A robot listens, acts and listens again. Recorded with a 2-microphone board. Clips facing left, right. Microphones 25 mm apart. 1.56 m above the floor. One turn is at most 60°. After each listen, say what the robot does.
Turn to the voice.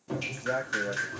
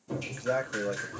Turn 30° right.
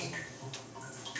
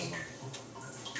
Keep listening.
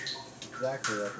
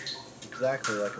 Turn 60° right.
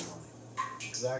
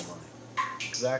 Turn 60° right.
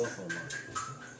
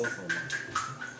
Facing the man speaking, under 1 m away.